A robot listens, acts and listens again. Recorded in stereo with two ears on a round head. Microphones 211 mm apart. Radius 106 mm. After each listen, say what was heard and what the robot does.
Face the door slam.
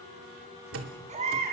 The door slam: about 60° right or 120° right. Turn 60° right.
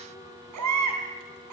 Keep listening.
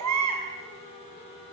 I heard a door slam, but can't make it out now. It was about straight ahead or 60° right.